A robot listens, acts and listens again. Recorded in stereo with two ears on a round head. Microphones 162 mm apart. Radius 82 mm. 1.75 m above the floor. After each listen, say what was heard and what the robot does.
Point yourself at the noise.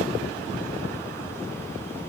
Keep listening.
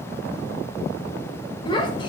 The child speaking: about 25° left or 155° left. Turn 25° left.
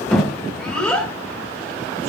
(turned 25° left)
Found it: a child speaking, straight ahead.